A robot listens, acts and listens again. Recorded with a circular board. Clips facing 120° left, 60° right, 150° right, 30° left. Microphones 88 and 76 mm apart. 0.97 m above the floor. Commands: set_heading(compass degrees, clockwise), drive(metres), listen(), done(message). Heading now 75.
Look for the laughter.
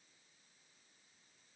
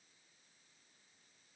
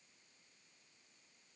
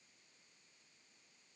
listen()
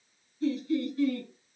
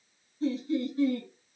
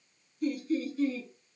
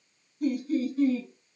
done("Found it: laughter, straight ahead.")